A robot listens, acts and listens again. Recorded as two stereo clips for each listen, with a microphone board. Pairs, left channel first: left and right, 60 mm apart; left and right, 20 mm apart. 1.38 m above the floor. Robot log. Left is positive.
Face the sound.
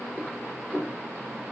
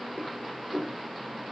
cmd yaw +30
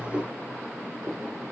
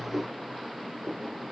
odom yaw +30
note: So it is at 25° right.
cmd yaw -25
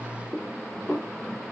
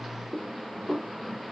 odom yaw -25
end: Facing the dishes clattering.